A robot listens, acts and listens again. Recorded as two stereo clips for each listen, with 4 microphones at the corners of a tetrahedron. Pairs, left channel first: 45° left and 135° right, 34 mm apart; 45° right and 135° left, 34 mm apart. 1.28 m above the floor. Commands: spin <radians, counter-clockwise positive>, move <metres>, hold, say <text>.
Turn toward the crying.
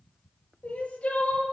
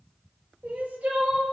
spin 1.75
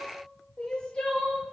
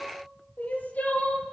spin -0.26
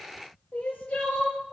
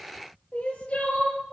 say Facing the crying, over 4 m away.